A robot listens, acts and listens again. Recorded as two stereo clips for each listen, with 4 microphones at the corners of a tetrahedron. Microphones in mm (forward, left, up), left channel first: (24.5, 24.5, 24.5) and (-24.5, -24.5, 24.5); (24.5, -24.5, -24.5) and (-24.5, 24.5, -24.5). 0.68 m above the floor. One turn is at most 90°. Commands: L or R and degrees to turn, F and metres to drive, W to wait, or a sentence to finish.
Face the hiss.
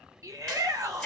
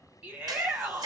W
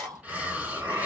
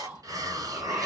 L90
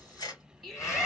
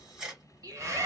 L65
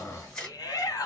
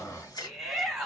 Facing the hiss, 1 to 2 m away.